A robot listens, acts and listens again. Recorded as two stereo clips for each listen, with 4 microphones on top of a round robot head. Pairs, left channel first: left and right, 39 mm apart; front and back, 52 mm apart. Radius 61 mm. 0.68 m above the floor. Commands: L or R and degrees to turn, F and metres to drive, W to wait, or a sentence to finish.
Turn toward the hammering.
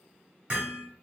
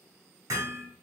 R155
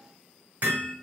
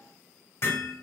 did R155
R45
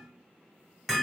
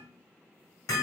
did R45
Facing the hammering, 1 to 2 m away.